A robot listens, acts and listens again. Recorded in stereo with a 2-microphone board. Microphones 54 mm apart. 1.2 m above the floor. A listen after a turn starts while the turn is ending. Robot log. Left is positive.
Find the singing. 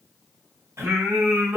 note: The singing: about 55° right or 125° right.
cmd yaw -55
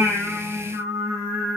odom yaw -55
note: So it is at 50° right.
cmd yaw -50
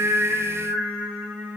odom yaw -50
note: The singing is now 35° right.
cmd yaw -35
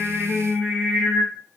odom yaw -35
note: The singing is now 15° right.
cmd yaw -15
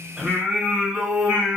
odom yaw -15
note: The singing is now 10° right.
cmd yaw -10
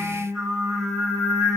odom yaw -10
end: Found it: singing, straight ahead.